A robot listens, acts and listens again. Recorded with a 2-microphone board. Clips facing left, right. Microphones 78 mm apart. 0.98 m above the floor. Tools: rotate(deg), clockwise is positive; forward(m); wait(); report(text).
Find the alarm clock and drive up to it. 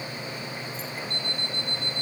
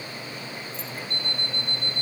rotate(45)
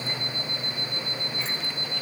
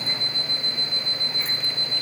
rotate(90)
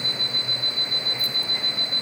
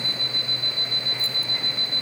rotate(30)
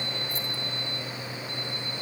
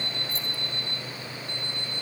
forward(1.0)
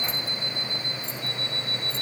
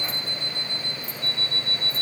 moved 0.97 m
forward(1.0)
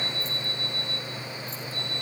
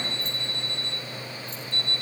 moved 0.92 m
forward(1.0)
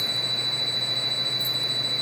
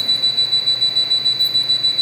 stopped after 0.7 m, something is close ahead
rotate(-10)
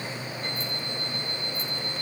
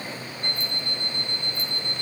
report("Arrived at the alarm clock, straight ahead.")